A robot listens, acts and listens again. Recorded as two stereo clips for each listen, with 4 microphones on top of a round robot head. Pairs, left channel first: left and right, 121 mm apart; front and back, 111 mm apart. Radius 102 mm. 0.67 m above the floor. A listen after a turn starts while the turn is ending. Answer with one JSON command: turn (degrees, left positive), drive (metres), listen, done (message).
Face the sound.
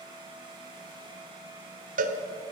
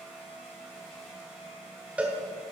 {"turn": -100}
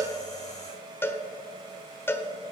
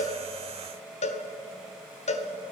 {"turn": 20}
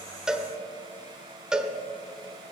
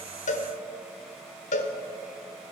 {"done": "Found it: a cowbell, straight ahead."}